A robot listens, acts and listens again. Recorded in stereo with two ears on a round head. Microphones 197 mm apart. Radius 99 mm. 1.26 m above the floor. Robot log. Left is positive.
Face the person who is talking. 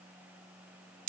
cmd idle
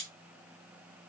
cmd idle
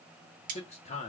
note: The man speaking: about 30° left or 150° left.
cmd yaw +30
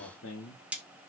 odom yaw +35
note: So it is at 110° left.
cmd yaw +110
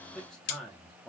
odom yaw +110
end: Facing the man speaking, under 1 m away.